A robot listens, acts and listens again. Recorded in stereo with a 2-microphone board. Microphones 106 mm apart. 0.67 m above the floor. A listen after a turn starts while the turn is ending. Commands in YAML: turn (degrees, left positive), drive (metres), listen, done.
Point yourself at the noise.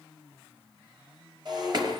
turn: -50
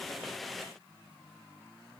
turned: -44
listen: true
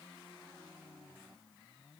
done: "I heard breaking glass, but can't make it out now. It was about 5° right or 90° right."